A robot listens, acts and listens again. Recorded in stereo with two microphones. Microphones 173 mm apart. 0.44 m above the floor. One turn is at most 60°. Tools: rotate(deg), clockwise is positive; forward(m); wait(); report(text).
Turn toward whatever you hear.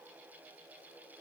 wait()
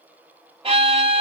rotate(35)
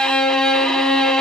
report("Found it: a violin, straight ahead, 1 to 2 m away.")